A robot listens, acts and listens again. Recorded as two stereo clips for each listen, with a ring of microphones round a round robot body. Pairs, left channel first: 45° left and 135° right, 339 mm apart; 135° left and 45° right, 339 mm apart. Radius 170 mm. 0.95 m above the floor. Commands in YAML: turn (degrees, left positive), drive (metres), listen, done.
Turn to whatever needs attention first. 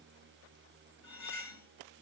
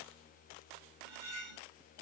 listen: true
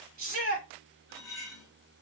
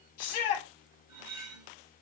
turn: 160
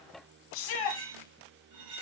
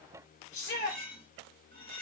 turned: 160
turn: 55
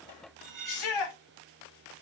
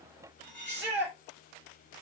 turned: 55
turn: 15
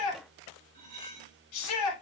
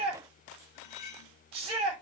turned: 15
done: "Facing the shout, 2 to 4 m away."